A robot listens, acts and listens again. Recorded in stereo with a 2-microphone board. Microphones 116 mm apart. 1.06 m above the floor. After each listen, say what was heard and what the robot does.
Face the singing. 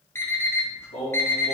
Turn 90° left.
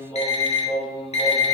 So it is at 30° left. Turn 30° left.
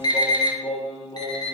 The singing is now 20° left. Turn 20° left.
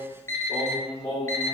The singing is now 15° left. Turn 15° left.
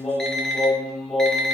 Facing the singing, 2 to 4 m away.